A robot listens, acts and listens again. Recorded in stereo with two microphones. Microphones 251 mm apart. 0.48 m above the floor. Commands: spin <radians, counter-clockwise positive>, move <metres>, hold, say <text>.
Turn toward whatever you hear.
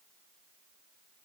hold
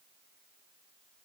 hold
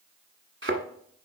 spin -0.96
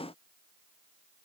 hold
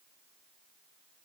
say I heard a thud, but can't make it out now. It was about straight ahead or 70° right.